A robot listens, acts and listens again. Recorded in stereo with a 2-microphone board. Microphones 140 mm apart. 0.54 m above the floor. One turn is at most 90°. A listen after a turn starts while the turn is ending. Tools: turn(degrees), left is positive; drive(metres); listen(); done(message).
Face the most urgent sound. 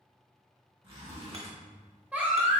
turn(degrees=-30)
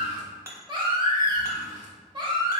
turn(degrees=-90)
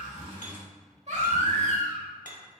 turn(degrees=-60)
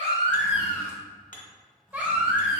turn(degrees=-10)
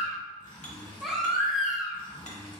done("Found it: a baby crying, straight ahead, 1 to 2 m away.")